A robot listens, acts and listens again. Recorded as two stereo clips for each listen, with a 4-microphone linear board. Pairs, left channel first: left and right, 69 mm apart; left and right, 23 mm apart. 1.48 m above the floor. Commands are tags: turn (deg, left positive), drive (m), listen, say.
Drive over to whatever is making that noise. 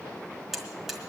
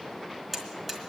<turn deg="30"/>
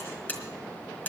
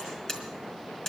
<turn deg="150"/>
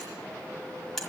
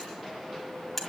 <drive m="1.0"/>
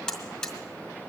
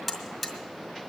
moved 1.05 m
<turn deg="10"/>
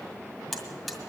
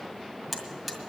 <drive m="1.0"/>
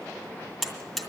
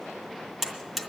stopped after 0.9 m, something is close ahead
<say>Arrived at the buzzer, straight ahead.</say>